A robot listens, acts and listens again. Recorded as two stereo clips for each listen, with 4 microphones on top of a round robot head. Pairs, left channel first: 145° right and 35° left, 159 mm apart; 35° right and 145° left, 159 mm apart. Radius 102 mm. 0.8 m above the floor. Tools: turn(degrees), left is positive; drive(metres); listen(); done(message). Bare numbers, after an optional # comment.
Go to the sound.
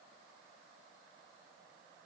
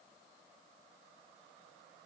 listen()
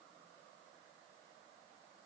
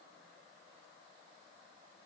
listen()
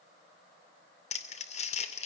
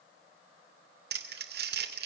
# The crumpling: 165° left.
turn(165)
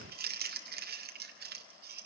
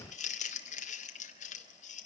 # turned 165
# The crumpling is now 10° left.
turn(10)
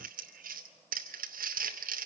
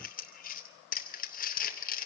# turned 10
drive(1.0)
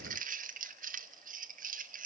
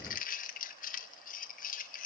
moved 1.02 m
drive(1.0)
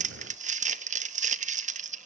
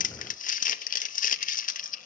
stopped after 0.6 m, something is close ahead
done("Arrived at the crumpling, straight ahead.")